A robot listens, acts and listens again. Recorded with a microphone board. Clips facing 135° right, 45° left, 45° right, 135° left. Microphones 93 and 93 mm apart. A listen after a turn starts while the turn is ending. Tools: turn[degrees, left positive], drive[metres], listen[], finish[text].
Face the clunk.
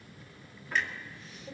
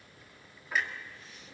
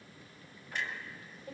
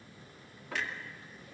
Thought: The clunk: 130° left.
Action: turn[130]
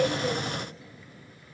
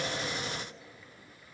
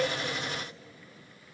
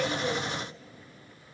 Action: finish[I heard a clunk from this way, but can't make it out now.]